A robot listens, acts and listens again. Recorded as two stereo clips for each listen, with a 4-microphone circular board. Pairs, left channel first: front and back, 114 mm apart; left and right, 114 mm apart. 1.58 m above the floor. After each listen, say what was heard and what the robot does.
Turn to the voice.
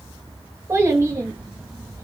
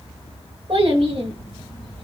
The child speaking: 120° right. Turn 120° right.
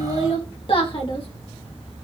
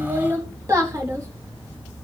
The child speaking is now 30° right. Turn 30° right.
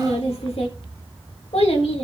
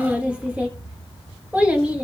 The child speaking is now 15° right. Turn 15° right.
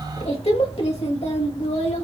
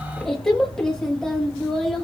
Found it: a child speaking, straight ahead, 1 to 2 m away.